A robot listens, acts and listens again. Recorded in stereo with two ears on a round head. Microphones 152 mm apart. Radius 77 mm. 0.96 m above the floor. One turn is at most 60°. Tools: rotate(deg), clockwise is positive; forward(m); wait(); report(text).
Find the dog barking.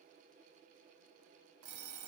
wait()
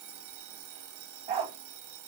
rotate(30)
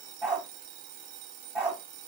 report("Facing the dog barking, under 1 m away.")